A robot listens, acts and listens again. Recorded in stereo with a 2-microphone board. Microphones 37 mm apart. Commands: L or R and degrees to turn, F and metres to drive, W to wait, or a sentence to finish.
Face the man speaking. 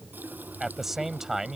R15
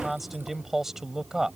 R15
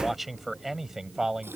R15
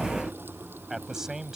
R15
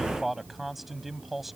R30
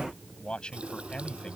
L25
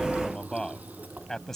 L10
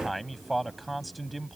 Found it: a man speaking, straight ahead.